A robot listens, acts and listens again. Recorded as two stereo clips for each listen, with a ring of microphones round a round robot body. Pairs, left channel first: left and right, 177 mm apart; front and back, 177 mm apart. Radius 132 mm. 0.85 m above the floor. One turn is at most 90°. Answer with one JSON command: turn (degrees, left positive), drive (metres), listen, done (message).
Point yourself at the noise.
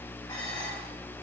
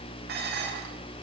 {"turn": 90}
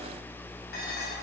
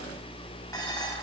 {"turn": 70}
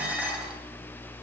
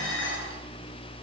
{"done": "Found it: dishes clattering, straight ahead, 2 to 4 m away."}